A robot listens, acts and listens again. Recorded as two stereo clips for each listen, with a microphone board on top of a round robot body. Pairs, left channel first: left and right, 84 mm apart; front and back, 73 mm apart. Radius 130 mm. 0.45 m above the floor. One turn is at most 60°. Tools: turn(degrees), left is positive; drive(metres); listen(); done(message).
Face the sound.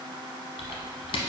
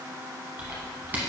turn(degrees=60)
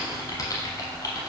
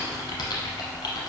turn(degrees=40)
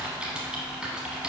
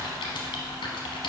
turn(degrees=-10)
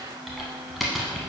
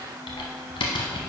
done("Found it: typing on a keyboard, straight ahead, under 1 m away.")